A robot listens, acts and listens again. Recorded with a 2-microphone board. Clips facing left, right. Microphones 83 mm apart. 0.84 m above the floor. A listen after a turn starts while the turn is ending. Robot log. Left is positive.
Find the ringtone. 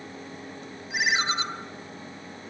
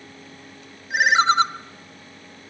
note: The ringtone: about 65° right or 115° right.
cmd yaw -65
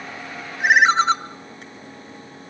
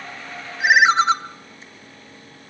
end: Found it: a ringtone, straight ahead, 1 to 2 m away.